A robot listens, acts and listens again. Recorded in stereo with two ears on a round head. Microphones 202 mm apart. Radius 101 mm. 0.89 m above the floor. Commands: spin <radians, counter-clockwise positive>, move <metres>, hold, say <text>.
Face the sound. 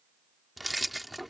spin 0.52
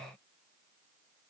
hold
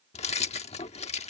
spin 2.62
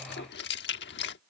spin 0.87
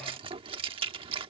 spin -0.44
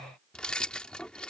say Found it: keys jangling, straight ahead.